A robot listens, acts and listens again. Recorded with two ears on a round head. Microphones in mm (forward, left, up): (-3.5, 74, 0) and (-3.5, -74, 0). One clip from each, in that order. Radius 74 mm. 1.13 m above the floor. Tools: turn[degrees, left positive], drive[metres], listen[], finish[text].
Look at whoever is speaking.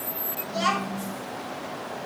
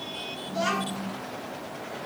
Action: turn[90]
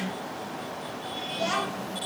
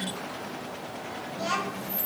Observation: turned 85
Action: finish[Facing the child speaking, over 4 m away.]